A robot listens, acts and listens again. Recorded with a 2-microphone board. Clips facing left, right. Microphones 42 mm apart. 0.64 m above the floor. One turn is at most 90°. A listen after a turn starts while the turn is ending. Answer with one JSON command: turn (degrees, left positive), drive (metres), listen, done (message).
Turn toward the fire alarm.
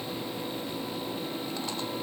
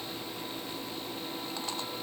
{"listen": true}
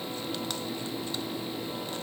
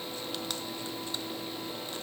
{"listen": true}
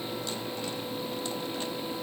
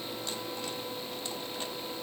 {"done": "I can't make out a fire alarm."}